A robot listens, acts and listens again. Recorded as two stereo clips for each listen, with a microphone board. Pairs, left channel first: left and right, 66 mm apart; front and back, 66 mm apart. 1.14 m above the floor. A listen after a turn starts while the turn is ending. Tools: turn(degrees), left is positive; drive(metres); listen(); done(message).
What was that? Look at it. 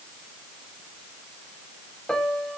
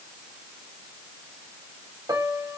turn(degrees=170)
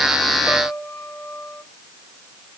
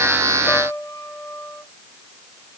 turn(degrees=40)
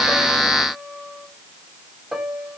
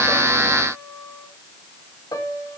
done("Found it: a piano, straight ahead.")